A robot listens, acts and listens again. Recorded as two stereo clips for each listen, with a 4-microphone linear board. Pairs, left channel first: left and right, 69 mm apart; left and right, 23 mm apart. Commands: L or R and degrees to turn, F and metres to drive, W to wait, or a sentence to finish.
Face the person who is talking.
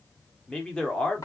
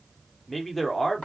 L30
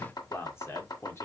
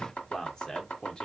L135
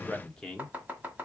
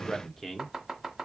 L10
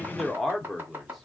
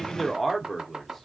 Found it: a man speaking, straight ahead.